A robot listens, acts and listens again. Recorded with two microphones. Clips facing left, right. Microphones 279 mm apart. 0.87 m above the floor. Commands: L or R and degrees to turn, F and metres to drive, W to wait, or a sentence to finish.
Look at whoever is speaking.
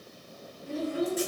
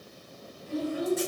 L55
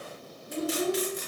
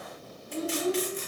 L70
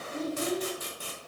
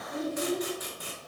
R10
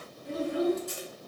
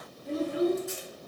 Facing the child speaking, 1 to 2 m away.